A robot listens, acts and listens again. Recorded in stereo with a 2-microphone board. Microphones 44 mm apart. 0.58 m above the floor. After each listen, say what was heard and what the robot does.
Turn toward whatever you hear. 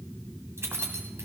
Turn 90° right.
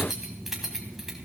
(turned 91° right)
So it is at 10° right. Turn 10° right.
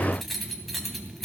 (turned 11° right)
Found it: keys jangling, straight ahead.